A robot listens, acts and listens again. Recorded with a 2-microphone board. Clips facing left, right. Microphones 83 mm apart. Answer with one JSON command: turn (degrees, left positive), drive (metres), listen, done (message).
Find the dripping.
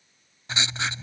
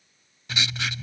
{"listen": true}
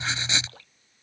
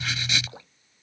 {"turn": -20}
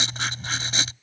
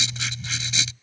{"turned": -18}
{"listen": true}
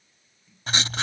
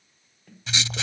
{"listen": true}
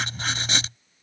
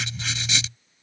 {"done": "I heard dripping, but can't make it out now. It was about straight ahead or 140° right."}